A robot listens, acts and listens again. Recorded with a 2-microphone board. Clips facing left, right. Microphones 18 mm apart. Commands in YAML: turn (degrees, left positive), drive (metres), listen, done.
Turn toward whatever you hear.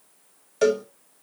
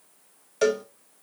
turn: -30
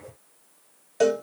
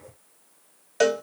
turn: -145
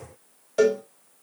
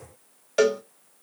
turn: -45
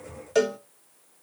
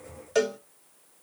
done: "Facing the cowbell."